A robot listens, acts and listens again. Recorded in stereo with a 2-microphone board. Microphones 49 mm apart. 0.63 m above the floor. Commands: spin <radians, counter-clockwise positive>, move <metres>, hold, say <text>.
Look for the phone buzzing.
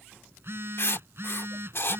spin -0.96
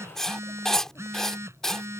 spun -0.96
spin -1.22
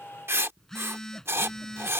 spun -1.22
spin 0.17
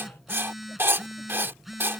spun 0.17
say Facing the phone buzzing.